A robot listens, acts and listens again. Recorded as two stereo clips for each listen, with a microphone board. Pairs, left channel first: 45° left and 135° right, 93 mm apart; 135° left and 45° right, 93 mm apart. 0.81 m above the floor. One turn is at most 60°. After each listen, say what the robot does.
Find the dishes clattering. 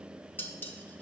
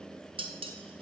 Turn 25° right.
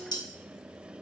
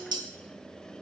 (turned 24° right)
Found it: dishes clattering, straight ahead, under 1 m away.